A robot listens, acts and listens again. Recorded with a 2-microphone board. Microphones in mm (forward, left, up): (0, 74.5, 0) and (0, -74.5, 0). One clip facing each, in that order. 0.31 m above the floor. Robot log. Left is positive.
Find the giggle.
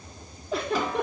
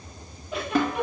note: The giggle: about 35° left or 145° left.
cmd yaw +35
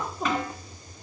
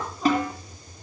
note: So it is at 110° left.
cmd yaw +110
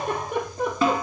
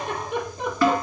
note: The giggle is now 50° left.
cmd yaw +50
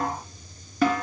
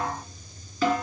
cmd idle
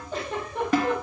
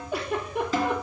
note: The giggle is now 10° right.
cmd yaw -10
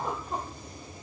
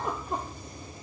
cmd idle
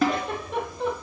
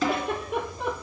end: Facing the giggle, 2 to 4 m away.